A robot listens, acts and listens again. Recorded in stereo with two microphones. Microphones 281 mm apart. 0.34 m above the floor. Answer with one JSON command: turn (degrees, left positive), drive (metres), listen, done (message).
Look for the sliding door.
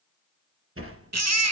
{"turn": -50}
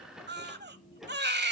{"done": "Found it: a sliding door, straight ahead, 2 to 4 m away."}